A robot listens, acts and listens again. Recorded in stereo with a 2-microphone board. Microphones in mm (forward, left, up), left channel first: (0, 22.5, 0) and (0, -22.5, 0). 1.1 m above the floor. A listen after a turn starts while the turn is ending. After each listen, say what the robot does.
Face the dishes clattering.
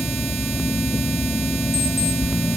Keep listening.
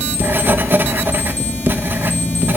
Keep listening.
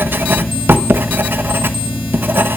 I can't make out dishes clattering to turn to.